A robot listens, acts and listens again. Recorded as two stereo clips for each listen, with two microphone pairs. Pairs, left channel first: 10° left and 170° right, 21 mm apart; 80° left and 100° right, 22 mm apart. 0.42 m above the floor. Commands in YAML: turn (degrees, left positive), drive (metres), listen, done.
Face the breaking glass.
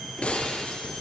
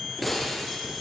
done: "Facing the breaking glass."